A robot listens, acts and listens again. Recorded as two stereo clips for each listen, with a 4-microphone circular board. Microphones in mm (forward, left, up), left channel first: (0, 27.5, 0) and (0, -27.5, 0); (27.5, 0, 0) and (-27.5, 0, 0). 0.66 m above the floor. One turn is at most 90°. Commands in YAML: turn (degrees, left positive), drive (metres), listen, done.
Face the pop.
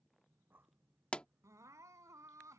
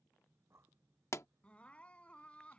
turn: 20
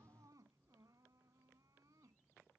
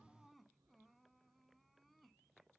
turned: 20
done: "Facing where the pop came from. I can't hear it now."